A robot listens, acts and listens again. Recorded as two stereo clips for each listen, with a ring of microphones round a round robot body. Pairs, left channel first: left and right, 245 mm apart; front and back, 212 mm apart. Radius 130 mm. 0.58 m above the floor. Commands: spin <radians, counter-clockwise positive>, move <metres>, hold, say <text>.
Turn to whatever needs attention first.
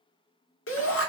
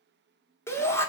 spin 1.31
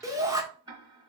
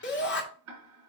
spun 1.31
spin -0.26
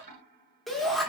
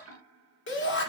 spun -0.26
say Found it: a shout, straight ahead.